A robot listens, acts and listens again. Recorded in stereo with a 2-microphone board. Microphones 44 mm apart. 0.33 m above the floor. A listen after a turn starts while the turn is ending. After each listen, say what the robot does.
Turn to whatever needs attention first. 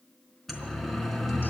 Turn 30° left.
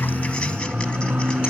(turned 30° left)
Turn 25° right.
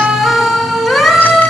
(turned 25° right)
Found it: a siren, straight ahead, 2 to 4 m away.